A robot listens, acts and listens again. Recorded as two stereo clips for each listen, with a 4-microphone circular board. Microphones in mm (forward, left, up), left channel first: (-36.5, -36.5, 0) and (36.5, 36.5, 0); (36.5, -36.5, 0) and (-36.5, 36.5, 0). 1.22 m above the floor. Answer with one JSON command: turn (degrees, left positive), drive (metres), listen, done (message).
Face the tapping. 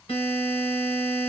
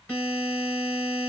{"listen": true}
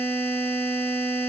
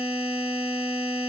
{"listen": true}
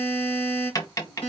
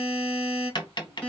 {"turn": -85}
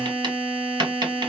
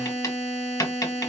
{"done": "Facing the tapping, 1 to 2 m away."}